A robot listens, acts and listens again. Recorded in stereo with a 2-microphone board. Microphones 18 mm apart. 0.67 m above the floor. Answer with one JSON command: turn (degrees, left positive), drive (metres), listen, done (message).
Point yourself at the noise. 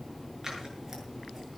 {"listen": true}
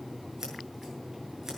{"listen": true}
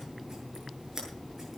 {"turn": -30}
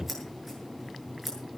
{"done": "Facing the scissors, over 4 m away."}